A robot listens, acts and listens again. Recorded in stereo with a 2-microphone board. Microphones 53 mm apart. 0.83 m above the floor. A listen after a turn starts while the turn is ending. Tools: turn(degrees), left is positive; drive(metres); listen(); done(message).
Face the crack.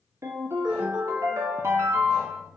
listen()
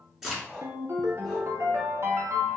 turn(degrees=-30)
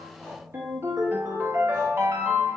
listen()
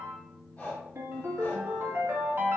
done("I heard a crack, but can't make it out now. It was about 20° left or 140° right.")